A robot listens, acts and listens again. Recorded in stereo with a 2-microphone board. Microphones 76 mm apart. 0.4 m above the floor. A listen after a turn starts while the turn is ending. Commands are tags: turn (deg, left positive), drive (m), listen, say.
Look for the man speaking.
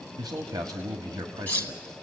<turn deg="-70"/>
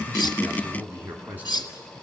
<turn deg="-25"/>
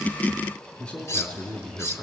<turn deg="15"/>
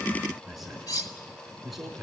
<say>Facing the man speaking, 2 to 4 m away.</say>